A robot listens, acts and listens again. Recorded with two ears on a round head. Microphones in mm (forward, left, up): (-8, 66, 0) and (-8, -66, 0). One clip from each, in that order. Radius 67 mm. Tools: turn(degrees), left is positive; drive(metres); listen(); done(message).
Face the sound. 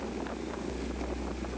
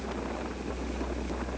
listen()
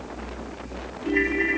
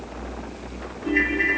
turn(degrees=-30)
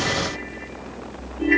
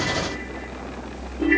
turn(degrees=15)
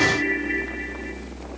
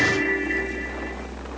done("Facing the ringtone, 2 to 4 m away.")